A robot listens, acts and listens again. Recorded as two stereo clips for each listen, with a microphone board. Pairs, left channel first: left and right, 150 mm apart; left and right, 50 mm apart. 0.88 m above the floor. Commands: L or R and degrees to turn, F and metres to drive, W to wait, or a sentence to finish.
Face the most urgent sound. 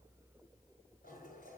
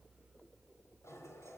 W
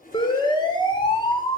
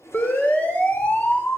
L35
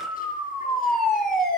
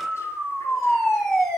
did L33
Found it: a siren, straight ahead, 2 to 4 m away.